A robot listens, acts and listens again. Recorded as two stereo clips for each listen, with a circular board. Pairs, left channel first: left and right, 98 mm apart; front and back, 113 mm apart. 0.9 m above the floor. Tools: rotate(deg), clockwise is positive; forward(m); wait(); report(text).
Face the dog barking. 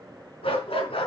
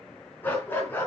rotate(-70)
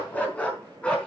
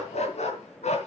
rotate(-10)
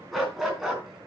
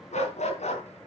report("Facing the dog barking.")